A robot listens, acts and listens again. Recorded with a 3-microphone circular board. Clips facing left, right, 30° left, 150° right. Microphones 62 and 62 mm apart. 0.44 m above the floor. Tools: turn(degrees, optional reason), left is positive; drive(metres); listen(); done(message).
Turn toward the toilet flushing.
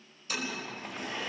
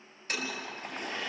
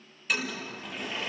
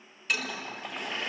turn(degrees=-55, reason="The toilet flushing: 55° right.")
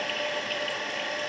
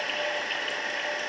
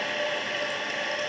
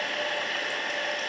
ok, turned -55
listen()
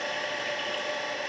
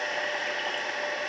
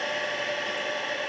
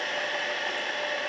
listen()
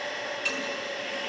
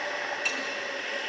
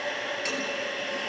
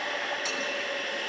done("Facing where the toilet flushing came from. I can't hear it now.")